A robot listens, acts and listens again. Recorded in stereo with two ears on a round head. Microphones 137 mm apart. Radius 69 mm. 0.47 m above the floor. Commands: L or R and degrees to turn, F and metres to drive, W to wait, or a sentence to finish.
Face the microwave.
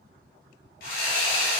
W
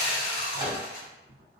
R30
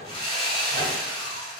W
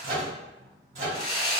R110
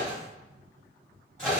Found it: a microwave, straight ahead.